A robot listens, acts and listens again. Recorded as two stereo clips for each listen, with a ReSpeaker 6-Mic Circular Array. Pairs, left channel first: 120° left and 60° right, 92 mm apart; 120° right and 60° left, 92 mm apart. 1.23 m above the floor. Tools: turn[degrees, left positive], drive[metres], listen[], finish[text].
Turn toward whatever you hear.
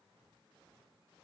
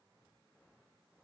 Action: listen[]
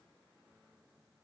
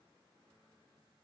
Action: listen[]
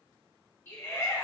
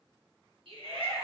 Thought: The shout: 60° left.
Action: turn[60]
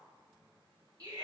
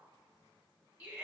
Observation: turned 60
Thought: The shout is now 10° right.
Action: turn[-10]
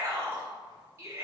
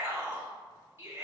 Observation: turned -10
Action: finish[Found it: a shout, straight ahead, 1 to 2 m away.]